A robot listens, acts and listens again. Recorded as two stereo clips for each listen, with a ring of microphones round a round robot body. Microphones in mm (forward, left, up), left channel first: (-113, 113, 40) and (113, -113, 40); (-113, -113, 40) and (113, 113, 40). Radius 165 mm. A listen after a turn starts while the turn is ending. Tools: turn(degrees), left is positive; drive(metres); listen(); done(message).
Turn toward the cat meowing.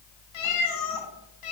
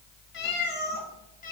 turn(degrees=160)
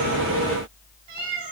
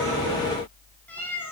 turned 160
turn(degrees=-50)
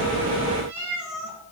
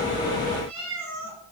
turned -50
done("Facing the cat meowing, 2 to 4 m away.")